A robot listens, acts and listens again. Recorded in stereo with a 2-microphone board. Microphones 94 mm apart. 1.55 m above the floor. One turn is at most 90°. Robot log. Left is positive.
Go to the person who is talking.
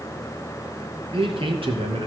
note: The man speaking: about 70° right or 110° right.
cmd yaw -70
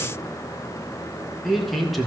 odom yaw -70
cmd fwd 1.0
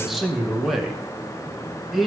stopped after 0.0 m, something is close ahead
end: Blocked. The man speaking is further on, straight ahead.